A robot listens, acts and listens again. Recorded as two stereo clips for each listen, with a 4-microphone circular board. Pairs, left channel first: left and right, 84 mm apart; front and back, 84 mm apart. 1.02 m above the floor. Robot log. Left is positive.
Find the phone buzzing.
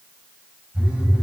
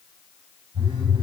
note: The phone buzzing: 170° right.
cmd yaw -170
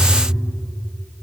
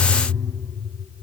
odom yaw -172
end: Found it: a phone buzzing, straight ahead, 2 to 4 m away.